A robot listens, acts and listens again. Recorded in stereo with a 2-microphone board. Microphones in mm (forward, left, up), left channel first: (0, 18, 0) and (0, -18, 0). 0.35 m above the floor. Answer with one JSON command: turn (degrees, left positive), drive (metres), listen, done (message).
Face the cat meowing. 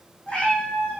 {"turn": 35}
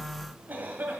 {"listen": true}
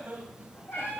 {"turn": 105}
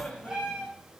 {"turn": -20}
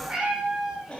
{"turn": -15}
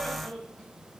{"listen": true}
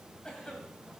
{"listen": true}
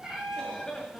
{"turn": -10}
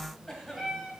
{"done": "Found it: a cat meowing, straight ahead, 2 to 4 m away."}